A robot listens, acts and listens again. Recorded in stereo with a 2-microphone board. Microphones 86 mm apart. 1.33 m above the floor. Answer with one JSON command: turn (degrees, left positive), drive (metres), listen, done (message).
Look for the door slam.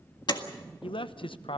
{"turn": 60}
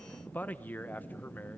{"listen": true}
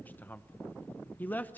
{"done": "I heard a door slam, but can't make it out now. It was about straight ahead or 60° left."}